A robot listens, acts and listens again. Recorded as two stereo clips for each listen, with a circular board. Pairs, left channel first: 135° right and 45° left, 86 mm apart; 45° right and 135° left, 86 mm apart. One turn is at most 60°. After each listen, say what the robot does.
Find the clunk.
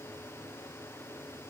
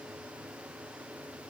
Keep listening.
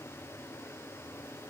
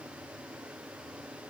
Keep listening.
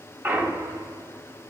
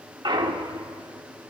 Turn 60° left.
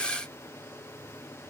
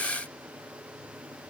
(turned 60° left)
Turn 50° left.
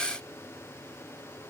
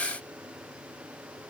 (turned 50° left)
Facing where the clunk came from. I can't hear it now.